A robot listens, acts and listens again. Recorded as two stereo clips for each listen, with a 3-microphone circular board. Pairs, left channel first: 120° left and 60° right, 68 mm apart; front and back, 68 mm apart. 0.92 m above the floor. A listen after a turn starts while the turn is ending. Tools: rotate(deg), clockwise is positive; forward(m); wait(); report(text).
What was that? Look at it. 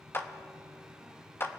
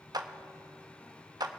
rotate(-175)
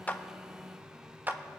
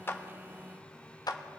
report("Found it: a clap, straight ahead, under 1 m away.")